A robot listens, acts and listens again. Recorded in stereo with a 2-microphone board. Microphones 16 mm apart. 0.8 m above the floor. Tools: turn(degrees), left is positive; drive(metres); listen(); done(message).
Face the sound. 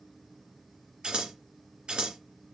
turn(degrees=-65)
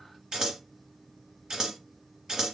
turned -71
turn(degrees=-40)
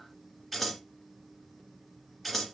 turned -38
done("Found it: scissors, straight ahead.")